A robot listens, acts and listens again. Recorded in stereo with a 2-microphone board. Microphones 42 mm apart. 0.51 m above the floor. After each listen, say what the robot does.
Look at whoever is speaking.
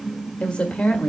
Turn 25° left.
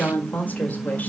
Turn 125° left.
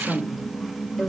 Found it: a woman speaking, straight ahead, 1 to 2 m away.